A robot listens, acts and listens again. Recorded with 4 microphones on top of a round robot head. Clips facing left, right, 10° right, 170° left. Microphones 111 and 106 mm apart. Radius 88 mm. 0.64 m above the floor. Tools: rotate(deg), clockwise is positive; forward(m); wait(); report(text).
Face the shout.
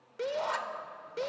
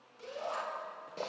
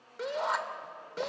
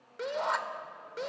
rotate(-80)
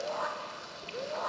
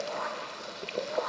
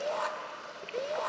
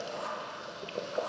report("Facing the shout.")